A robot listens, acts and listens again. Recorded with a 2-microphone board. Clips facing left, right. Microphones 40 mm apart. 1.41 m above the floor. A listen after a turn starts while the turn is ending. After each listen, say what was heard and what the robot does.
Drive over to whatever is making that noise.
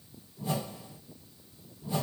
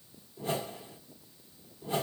Turn 90° right.
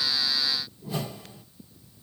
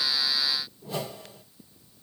Drive 1.0 m forward.
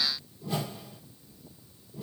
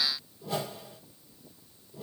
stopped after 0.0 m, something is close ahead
Something is in my way. I am facing the whoosh but have not reached it.